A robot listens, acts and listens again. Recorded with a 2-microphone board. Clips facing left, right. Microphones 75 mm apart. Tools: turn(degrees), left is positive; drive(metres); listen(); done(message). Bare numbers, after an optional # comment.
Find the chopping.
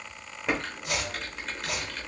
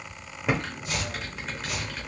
# The chopping: about 75° left or 105° left.
turn(75)
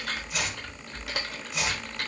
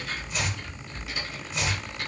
done("Facing the chopping.")